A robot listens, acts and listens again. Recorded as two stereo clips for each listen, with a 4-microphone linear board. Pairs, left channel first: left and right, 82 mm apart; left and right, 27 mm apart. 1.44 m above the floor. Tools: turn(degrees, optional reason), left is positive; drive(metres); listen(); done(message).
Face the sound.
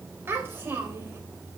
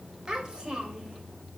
turn(degrees=-30, reason="The child speaking: about 30° right or 150° right.")
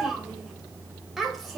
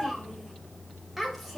done("Facing the child speaking.")